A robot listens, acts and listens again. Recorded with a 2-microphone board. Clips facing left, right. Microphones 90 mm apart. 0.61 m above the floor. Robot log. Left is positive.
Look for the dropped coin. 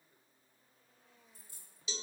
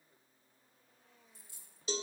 note: The dropped coin: about 50° left or 130° left.
cmd yaw +50
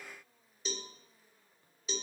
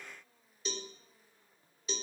cmd idle
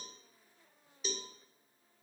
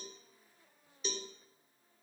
end: I heard a dropped coin, but can't make it out now. It was about straight ahead or 80° left.